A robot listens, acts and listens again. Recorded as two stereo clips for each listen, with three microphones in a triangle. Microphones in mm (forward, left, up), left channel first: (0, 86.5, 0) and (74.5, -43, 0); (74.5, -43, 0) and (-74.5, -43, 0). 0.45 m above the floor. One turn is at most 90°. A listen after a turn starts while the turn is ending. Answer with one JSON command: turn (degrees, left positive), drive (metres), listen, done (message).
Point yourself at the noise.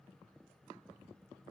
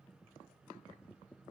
{"listen": true}
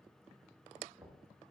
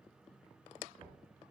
{"turn": -90}
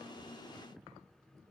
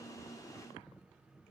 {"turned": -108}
{"done": "Found it: knocking, straight ahead."}